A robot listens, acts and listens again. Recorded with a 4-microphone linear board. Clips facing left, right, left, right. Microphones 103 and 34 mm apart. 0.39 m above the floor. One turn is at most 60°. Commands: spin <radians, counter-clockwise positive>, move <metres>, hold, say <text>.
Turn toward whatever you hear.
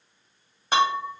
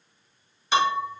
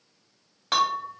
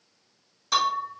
spin 0.79
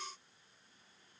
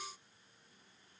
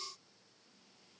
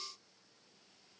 hold
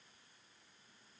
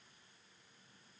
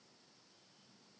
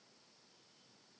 say I heard breaking glass, but can't make it out now. It was about straight ahead or 90° left.